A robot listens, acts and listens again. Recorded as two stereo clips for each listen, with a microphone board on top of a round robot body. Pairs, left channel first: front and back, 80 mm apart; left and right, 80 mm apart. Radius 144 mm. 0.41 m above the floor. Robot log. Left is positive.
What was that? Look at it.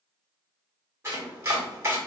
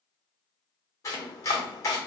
note: The chopping: 130° left.
cmd yaw +130
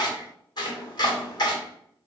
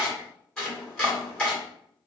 note: The chopping is now 10° left.
cmd yaw +10
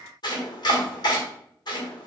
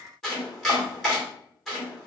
end: Facing the chopping, 1 to 2 m away.